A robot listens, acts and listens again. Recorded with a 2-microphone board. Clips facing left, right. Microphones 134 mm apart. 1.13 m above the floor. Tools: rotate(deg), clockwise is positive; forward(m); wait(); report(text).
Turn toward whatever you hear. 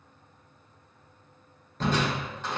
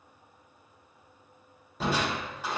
rotate(30)
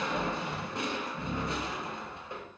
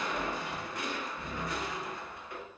rotate(-25)
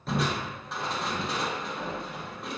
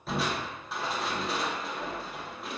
report("Facing the crushing, under 1 m away.")